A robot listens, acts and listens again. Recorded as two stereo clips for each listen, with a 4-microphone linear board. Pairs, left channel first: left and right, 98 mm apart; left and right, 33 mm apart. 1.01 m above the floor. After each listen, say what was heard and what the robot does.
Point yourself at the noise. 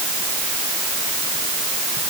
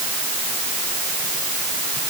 Keep listening.
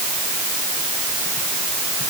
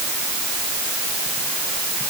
Keep listening.
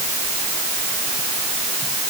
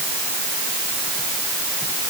I can't make out anything.